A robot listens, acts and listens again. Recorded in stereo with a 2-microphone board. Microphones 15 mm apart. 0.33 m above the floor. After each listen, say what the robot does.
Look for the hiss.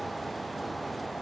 Keep listening.
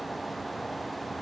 Keep listening.
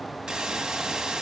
Turn 70° right.
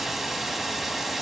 Turn 20° right.
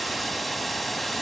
Found it: a hiss, straight ahead, 1 to 2 m away.